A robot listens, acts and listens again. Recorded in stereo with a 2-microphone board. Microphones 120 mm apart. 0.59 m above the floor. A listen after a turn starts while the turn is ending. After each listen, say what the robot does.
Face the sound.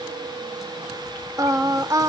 Turn 30° right.
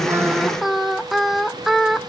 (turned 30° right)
Facing the singing, under 1 m away.